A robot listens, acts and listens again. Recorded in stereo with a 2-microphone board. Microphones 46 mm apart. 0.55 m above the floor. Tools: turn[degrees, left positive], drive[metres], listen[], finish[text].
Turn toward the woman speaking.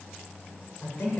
Thought: The woman speaking: about 65° left or 115° left.
Action: turn[65]
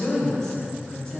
Thought: So it is at 10° left.
Action: turn[10]
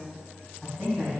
Action: finish[Facing the woman speaking.]